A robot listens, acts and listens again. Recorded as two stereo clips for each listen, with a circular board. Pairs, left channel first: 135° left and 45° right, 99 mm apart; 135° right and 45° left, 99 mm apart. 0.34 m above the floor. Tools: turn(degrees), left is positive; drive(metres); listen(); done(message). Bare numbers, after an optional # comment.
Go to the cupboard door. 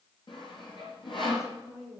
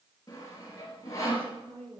listen()
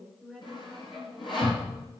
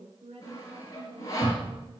# The cupboard door: 95° left.
turn(95)
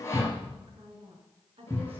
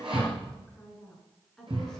drive(1.0)
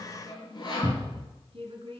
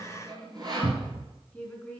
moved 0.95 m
drive(1.0)
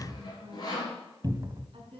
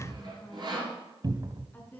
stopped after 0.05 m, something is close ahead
done("Arrived at the cupboard door, straight ahead.")